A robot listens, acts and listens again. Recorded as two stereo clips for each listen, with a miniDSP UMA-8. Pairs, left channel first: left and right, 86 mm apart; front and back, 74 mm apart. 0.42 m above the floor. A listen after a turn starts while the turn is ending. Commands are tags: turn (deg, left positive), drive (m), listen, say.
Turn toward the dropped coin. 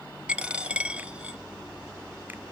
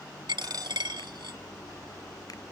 <turn deg="-165"/>
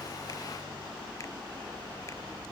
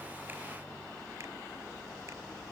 <say>Facing where the dropped coin came from. I can't hear it now.</say>